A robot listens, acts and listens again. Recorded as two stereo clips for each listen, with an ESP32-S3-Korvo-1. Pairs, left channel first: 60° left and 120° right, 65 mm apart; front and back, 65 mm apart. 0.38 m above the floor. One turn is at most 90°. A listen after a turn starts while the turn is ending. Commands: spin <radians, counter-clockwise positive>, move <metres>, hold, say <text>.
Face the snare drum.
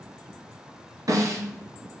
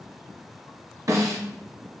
spin -1.57
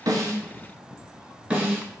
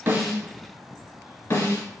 spin -0.96
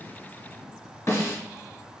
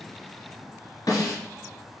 spin 0.17
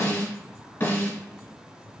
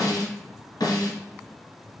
say Found it: a snare drum, straight ahead, 1 to 2 m away.